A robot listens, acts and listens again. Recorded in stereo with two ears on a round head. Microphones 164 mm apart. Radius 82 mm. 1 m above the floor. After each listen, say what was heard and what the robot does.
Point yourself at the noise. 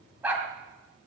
Turn 30° right.
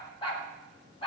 So it is at 30° left. Turn 30° left.
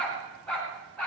Found it: a dog barking, straight ahead.